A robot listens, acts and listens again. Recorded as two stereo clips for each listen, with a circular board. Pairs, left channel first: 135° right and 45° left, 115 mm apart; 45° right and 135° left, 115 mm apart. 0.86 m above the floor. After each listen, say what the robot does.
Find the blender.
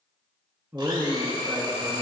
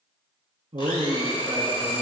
Found it: a blender, straight ahead.